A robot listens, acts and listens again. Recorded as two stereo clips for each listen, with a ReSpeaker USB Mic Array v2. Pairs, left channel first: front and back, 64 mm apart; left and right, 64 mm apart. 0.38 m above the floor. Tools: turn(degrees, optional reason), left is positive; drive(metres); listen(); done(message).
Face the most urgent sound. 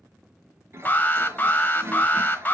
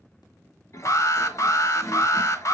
turn(degrees=60, reason="The alarm: 60° left.")
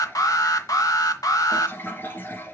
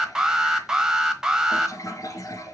turn(degrees=-10, reason="The alarm is now 10° right.")
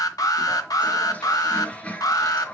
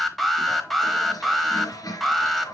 done("Facing the alarm, 1 to 2 m away.")